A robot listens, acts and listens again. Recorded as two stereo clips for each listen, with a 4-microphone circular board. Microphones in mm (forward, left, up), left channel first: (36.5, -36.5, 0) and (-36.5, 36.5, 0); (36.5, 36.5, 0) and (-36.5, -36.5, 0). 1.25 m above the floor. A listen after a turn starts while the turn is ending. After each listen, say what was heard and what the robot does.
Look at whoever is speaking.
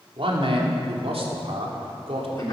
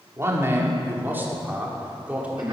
The man speaking: 145° left. Turn 145° left.
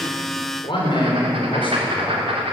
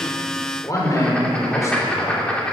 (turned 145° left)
The man speaking is now 15° right. Turn 15° right.
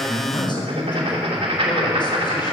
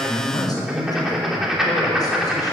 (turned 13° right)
Facing the man speaking.